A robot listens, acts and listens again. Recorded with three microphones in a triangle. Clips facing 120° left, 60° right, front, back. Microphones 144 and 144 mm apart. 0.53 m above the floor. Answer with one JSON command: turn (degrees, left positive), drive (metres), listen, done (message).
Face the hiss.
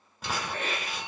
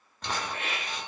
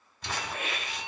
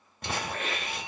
{"turn": 85}
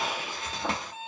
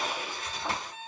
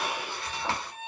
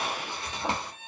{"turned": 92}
{"turn": -10}
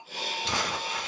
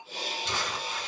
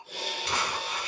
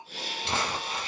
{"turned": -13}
{"done": "Facing the hiss."}